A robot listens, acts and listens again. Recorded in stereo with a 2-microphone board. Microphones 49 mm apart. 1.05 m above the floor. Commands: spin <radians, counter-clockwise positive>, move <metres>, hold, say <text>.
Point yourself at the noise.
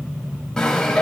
spin 0.52
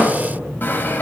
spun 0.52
spin 2.36
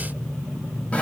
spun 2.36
hold
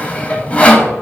spin 0.52
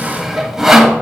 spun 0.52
spin -0.17
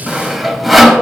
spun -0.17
say Facing the sawing, under 1 m away.